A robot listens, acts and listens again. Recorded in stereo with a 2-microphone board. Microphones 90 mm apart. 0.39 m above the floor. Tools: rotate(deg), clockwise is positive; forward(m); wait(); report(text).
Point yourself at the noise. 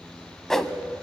rotate(-30)
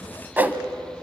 rotate(25)
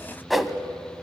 report("Facing the whoosh.")